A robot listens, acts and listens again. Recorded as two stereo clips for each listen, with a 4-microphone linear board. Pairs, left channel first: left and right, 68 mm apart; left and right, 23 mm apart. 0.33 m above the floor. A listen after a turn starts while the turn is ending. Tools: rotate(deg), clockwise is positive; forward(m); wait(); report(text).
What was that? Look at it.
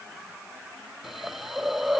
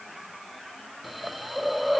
rotate(-30)
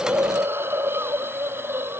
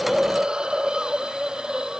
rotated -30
rotate(35)
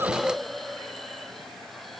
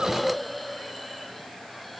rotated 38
report("Found it: a hiss, straight ahead.")